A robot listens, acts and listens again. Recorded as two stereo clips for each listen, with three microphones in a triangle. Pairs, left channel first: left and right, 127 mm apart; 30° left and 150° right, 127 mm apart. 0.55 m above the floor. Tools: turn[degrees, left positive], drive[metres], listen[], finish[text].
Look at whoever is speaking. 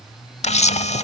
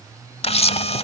Action: listen[]
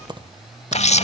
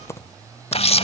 Action: listen[]
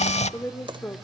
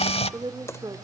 Thought: The woman speaking: 165° left.
Action: turn[165]
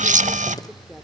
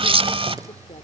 Action: listen[]
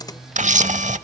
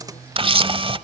Action: listen[]
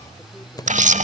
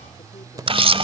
Action: finish[I heard a woman speaking from this way, but can't make it out now.]